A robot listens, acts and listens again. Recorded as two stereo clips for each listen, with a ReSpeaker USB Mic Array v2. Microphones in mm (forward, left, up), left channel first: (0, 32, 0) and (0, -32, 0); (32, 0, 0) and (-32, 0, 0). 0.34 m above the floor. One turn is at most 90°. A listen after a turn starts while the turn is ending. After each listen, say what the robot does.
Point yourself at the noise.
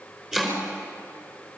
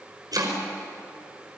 Turn 90° right.
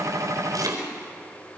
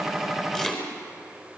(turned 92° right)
Turn 80° right.
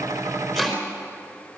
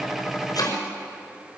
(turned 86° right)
Found it: chopping, straight ahead.